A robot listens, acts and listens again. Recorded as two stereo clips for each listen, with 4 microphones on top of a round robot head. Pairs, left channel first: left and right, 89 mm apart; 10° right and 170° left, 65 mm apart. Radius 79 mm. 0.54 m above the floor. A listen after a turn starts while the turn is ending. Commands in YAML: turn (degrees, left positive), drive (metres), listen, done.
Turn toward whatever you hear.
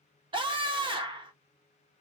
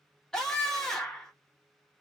turn: -90
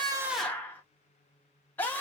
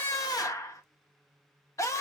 turn: 20
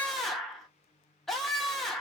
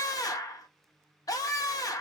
done: "Facing the scream, 1 to 2 m away."